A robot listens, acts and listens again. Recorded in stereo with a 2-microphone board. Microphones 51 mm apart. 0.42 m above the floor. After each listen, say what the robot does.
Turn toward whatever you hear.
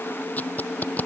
Turn 40° left.
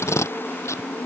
Turn 100° left.
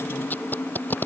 Turn 35° left.
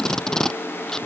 Turn 10° left.
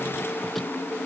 Keep listening.
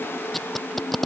Found it: tape being pulled, straight ahead.